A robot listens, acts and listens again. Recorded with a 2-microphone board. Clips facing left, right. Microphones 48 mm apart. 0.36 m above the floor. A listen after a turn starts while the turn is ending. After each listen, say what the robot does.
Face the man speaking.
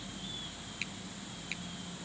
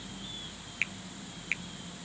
Keep listening.
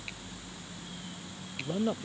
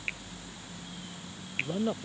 Turn 30° left.
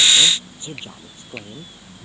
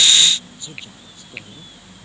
Keep listening.
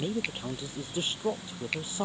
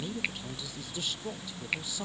Turn 145° left.
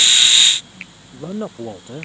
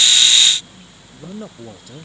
Turn 25° left.
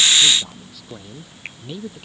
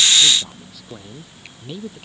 Found it: a man speaking, straight ahead.